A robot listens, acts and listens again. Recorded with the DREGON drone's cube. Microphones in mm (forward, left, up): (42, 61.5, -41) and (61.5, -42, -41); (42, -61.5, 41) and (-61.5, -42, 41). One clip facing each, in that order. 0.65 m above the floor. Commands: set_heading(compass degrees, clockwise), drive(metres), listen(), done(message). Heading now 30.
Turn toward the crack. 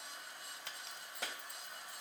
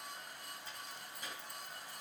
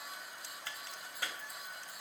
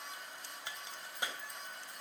set_heading(290)
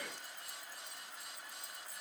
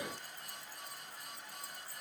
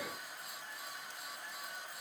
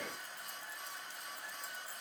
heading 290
done("Facing where the crack came from. I can't hear it now.")